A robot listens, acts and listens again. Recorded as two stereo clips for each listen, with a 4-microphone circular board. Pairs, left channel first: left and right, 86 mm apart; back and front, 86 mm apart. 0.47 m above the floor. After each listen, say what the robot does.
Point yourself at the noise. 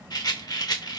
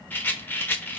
Turn 115° left.
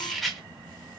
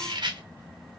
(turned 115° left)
Found it: a rattle, straight ahead, under 1 m away.